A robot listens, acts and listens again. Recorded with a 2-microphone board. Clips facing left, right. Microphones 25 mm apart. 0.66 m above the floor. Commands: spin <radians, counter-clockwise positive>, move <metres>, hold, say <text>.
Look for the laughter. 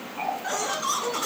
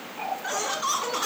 spin -0.35
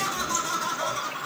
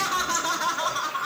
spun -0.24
spin -2.27
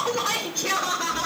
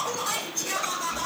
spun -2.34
spin 0.79
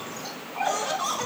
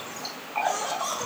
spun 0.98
spin 0.17
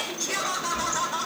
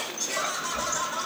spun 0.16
say Found it: laughter, straight ahead, 2 to 4 m away.